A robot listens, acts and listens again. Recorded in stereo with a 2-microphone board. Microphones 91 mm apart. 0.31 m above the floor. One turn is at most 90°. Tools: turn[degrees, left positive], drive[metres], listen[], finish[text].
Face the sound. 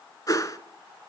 Thought: The whoosh: about 40° left or 140° left.
Action: turn[40]
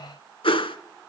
Thought: So it is at 100° left.
Action: turn[90]
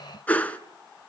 Thought: The whoosh is now 15° left.
Action: turn[15]
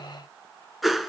Action: finish[Facing the whoosh, under 1 m away.]